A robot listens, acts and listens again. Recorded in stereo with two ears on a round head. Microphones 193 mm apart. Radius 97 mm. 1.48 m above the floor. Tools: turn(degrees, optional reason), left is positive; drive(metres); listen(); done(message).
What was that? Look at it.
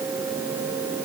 listen()
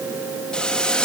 turn(degrees=30)
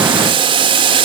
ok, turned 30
turn(degrees=-25, reason="So it is at 25° right.")
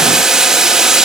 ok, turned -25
done("Facing the boiling, 1 to 2 m away.")